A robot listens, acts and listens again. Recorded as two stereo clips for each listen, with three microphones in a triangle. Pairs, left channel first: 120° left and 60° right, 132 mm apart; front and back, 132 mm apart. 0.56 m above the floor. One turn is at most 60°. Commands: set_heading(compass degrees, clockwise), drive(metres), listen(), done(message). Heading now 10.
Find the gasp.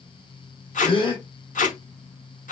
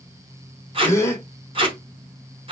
set_heading(310)
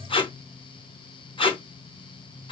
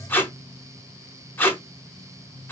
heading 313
set_heading(303)
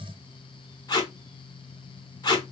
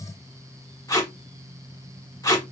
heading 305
done("I heard a gasp from this way, but can't make it out now.")